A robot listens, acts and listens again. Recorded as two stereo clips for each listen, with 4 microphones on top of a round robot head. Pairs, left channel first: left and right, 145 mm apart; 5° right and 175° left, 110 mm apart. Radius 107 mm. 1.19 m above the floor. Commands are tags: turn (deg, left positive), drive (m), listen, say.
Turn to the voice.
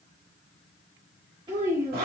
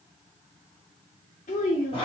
<turn deg="-25"/>
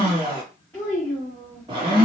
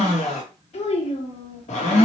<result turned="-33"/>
<turn deg="10"/>
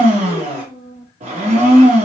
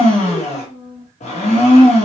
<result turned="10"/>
<say>Found it: a child speaking, straight ahead.</say>